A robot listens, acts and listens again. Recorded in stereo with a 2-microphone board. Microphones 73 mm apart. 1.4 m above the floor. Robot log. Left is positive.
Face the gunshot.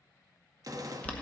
note: The gunshot: about 55° right or 125° right.
cmd yaw -55
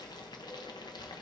cmd idle
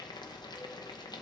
end: I heard a gunshot, but can't make it out now. It was about straight ahead or 70° right.